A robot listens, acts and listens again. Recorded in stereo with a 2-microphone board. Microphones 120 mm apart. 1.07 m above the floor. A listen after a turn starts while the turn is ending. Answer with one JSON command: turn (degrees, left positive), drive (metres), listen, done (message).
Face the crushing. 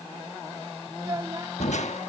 {"turn": 75}
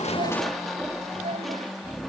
{"done": "Found it: crushing, straight ahead."}